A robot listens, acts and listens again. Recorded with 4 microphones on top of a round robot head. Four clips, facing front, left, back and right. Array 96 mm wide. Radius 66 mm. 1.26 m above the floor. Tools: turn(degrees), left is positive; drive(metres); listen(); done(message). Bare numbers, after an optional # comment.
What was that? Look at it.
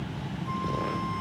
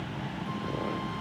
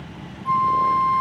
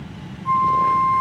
# The flute: 125° right.
turn(-125)
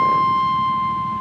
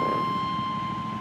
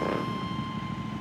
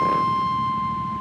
# The flute is now 15° right.
turn(-15)
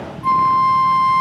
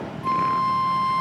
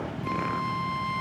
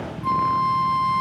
done("Facing the flute.")